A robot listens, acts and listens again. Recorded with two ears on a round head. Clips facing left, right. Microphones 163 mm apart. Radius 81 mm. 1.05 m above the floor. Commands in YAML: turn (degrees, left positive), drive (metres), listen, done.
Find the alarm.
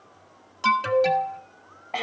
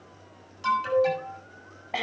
turn: 65
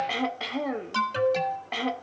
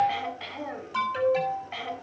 turn: 50
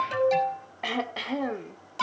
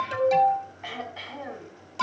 done: "Found it: an alarm, straight ahead."